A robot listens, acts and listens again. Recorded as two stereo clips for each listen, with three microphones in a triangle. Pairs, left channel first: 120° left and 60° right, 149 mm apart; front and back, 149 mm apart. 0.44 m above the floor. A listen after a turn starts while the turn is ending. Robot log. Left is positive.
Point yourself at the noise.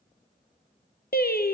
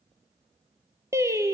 note: The singing: 110° left.
cmd yaw +110
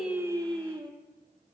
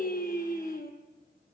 end: Facing the singing, 2 to 4 m away.